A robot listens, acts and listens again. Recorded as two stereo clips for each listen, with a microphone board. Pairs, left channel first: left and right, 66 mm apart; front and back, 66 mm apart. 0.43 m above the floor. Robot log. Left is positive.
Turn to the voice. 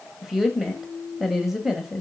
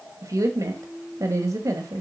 note: The woman speaking: 175° right.
cmd yaw -175
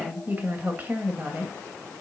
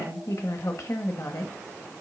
note: The woman speaking is now 30° right.
cmd yaw -30
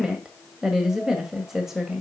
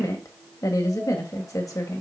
note: The woman speaking is now 10° right.
cmd yaw -10
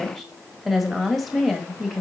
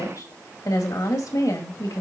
end: Facing the woman speaking, 1 to 2 m away.